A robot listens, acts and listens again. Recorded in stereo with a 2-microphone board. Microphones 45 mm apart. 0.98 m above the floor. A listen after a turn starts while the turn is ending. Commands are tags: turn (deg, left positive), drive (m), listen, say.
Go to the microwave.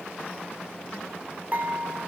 <listen/>
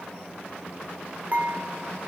<listen/>
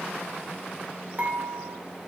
<say>I can't make out a microwave to turn to.</say>